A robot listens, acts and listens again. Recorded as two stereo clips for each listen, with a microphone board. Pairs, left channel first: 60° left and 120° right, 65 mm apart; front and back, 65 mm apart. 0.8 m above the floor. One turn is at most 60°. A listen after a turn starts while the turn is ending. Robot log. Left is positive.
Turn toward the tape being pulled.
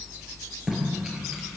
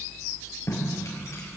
note: The tape being pulled: 40° right.
cmd yaw -40
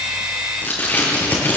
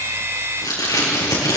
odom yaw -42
end: Facing the tape being pulled, over 4 m away.